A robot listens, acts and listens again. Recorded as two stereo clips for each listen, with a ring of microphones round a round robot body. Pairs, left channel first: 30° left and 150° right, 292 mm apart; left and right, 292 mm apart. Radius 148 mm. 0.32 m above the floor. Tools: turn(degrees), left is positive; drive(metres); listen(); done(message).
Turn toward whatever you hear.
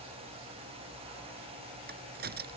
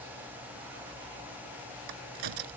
turn(degrees=-90)
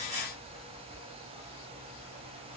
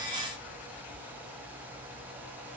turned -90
done("I heard a crack from this way, but can't make it out now.")